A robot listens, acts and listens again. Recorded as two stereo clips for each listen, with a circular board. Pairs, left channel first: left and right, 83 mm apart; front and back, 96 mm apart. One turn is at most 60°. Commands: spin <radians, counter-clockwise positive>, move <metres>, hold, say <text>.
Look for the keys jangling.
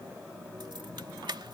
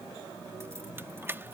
spin -1.05
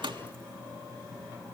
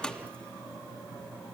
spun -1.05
spin -1.05
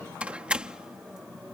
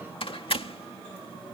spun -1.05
spin -0.17
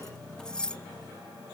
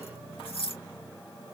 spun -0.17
spin 0.17
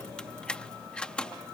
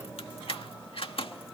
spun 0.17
spin 0.17
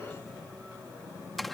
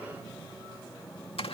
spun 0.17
say Facing the keys jangling.